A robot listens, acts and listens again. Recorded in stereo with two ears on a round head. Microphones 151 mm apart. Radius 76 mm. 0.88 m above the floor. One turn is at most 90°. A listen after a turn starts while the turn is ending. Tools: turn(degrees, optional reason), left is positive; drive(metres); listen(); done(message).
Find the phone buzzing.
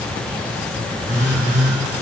turn(degrees=40, reason="The phone buzzing: about 40° left or 140° left.")
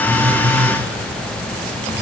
listen()
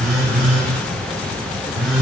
done("Found it: a phone buzzing, straight ahead.")